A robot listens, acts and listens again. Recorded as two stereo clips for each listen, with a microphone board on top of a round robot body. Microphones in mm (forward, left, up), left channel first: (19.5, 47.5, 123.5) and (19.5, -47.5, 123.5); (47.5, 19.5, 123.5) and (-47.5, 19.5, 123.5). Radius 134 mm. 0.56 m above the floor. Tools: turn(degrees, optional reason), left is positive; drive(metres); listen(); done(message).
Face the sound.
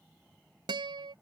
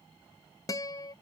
turn(degrees=-55, reason="The guitar: 55° right.")
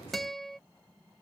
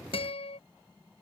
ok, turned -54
done("Found it: a guitar, straight ahead.")